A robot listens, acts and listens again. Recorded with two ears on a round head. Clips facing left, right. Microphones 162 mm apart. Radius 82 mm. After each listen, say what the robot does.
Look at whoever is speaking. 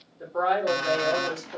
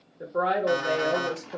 Turn 25° right.
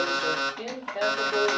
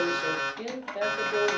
Found it: a woman speaking, straight ahead.